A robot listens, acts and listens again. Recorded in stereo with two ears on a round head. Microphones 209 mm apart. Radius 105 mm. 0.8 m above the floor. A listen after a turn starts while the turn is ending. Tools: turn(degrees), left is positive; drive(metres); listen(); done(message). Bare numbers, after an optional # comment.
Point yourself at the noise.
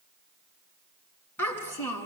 turn(30)
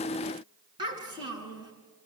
# So it is at 20° right.
turn(-20)
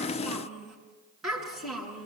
done("Facing the child speaking, over 4 m away.")